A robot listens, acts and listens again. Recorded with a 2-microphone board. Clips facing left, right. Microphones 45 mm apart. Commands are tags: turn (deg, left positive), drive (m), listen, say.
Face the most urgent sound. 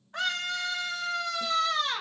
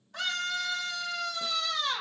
<turn deg="35"/>
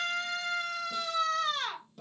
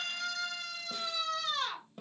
<turn deg="105"/>
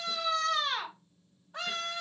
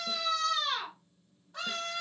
<turn deg="25"/>
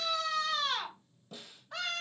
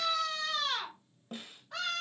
<say>Facing the scream.</say>